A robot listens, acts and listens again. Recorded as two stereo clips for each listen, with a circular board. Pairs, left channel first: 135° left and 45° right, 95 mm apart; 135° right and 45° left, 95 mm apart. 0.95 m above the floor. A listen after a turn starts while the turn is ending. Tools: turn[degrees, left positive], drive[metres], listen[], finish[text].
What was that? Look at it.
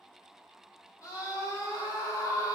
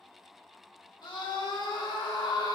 Thought: The scream: 175° right.
Action: turn[-175]
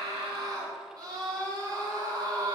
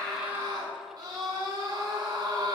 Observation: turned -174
Action: finish[Facing the scream.]